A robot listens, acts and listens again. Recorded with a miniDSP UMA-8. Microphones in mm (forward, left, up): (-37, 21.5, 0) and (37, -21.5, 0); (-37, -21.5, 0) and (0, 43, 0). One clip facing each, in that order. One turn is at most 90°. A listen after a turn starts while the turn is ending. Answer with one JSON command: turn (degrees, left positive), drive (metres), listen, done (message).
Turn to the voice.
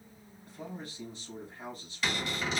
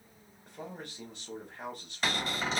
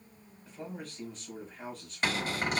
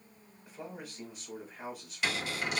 {"turn": -20}
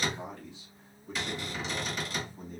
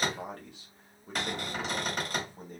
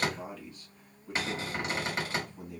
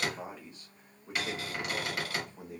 {"done": "Found it: a man speaking, straight ahead, 1 to 2 m away."}